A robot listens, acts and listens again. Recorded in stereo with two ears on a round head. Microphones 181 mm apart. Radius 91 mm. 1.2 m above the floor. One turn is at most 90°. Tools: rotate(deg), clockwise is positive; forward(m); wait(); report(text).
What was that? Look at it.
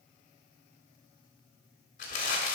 rotate(-40)
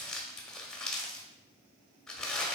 report("Facing the crumpling, 1 to 2 m away.")